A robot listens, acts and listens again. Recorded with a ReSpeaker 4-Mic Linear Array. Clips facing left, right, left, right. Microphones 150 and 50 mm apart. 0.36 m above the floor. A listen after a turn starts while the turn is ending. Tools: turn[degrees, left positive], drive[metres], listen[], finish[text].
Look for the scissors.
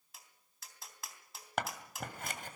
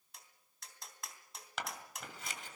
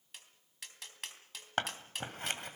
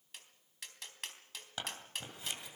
Thought: The scissors: about 55° left or 125° left.
Action: turn[55]
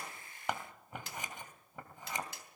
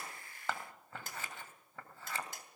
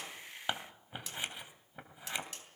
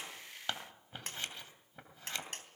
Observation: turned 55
Thought: So it is at 20° left.
Action: turn[20]
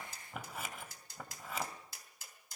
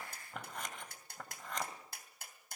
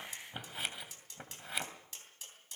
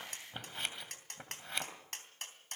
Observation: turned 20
Action: finish[Facing the scissors, 2 to 4 m away.]